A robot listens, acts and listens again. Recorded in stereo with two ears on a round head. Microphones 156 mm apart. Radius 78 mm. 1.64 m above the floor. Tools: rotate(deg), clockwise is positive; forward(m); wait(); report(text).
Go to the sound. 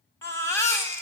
rotate(-15)
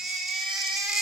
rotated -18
forward(1.0)
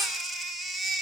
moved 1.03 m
forward(1.0)
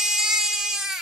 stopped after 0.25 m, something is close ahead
report("I am next to the baby crying.")